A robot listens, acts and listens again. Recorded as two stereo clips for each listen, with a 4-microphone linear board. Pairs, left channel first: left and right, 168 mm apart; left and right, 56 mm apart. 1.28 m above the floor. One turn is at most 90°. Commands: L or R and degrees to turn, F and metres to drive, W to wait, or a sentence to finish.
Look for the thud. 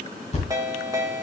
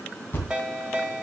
L40
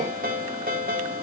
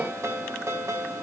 W
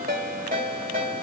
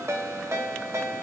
I heard a thud, but can't make it out now. It was about straight ahead or 100° left.